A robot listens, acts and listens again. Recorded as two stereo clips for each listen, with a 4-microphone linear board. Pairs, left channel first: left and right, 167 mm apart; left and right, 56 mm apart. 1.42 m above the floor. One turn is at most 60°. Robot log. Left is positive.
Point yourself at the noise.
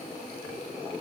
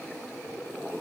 cmd idle
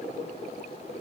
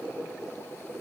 cmd idle
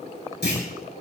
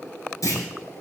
cmd yaw +60
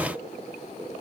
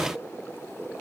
note: Nothing new. It was at 30° left.
cmd yaw +30
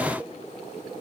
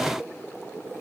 end: Facing where the clunk came from. I can't hear it now.